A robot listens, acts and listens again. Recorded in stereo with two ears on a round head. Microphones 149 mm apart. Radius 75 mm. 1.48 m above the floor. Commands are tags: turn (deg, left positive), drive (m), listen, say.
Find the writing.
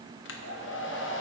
<listen/>
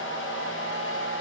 <listen/>
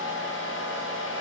<say>I can't make out writing, only a hair dryer.</say>